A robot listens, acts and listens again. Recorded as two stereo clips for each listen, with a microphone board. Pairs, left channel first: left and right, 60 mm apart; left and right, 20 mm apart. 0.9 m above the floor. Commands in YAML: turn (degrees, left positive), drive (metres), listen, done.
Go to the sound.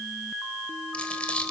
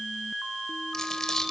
turn: 20
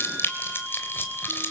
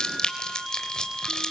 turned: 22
turn: 140
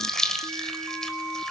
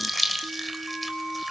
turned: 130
turn: 10
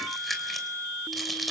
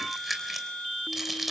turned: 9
drive: 1.0
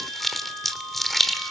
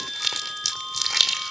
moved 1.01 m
drive: 1.0
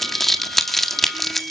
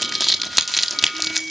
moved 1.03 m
drive: 1.0
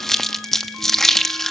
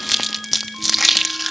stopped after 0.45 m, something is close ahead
done: "Arrived at the crumpling, straight ahead."